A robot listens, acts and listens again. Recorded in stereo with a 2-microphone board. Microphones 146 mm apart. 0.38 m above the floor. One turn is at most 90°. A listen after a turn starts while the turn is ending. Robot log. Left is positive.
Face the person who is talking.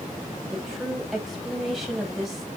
cmd yaw +30
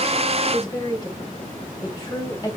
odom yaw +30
note: So it is at 150° left.
cmd yaw +90
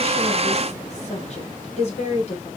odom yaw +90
note: The woman speaking is now 60° left.
cmd yaw +60
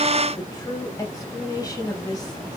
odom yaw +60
note: The woman speaking is now 30° left.
cmd yaw +30
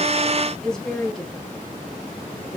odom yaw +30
end: Facing the woman speaking.